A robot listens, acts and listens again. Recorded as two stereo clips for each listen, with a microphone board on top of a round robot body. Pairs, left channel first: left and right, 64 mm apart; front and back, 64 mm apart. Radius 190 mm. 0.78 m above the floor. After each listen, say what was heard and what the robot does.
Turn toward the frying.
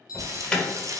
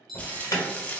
The frying: 65° right. Turn 65° right.
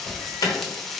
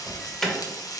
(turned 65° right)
Found it: frying, straight ahead.